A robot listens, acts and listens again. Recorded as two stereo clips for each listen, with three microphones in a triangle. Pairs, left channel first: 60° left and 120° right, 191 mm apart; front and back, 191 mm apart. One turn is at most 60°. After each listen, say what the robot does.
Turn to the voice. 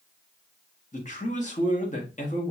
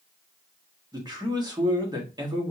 Turn 60° left.
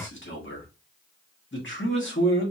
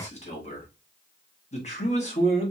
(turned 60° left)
Turn 55° left.
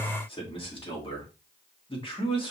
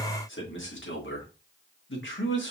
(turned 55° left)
Facing the man speaking.